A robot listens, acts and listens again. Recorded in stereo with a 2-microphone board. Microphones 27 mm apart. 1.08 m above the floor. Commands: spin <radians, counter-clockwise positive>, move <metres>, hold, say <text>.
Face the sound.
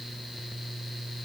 hold
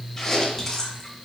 spin 0.52
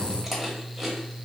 spin -0.26
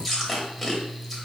say Found it: chewing, straight ahead, 1 to 2 m away.